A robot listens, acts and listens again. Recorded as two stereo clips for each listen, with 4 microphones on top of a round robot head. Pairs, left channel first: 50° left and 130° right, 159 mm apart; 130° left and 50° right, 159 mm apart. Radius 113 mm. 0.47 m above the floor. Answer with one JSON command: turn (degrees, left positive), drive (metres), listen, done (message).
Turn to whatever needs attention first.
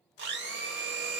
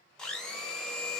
{"listen": true}
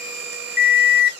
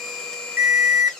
{"turn": 30}
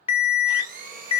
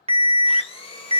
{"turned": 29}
{"done": "Facing the alarm, under 1 m away."}